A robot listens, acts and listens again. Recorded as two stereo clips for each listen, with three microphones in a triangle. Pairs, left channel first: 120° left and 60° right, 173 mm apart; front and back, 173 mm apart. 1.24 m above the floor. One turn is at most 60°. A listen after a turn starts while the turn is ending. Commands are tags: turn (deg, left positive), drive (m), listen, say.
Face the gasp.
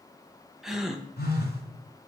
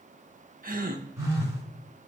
<turn deg="-60"/>
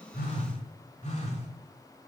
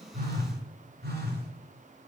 <turn deg="-60"/>
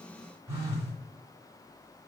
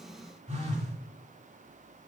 <turn deg="-30"/>
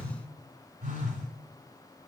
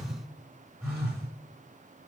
<say>I heard a gasp from this way, but can't make it out now.</say>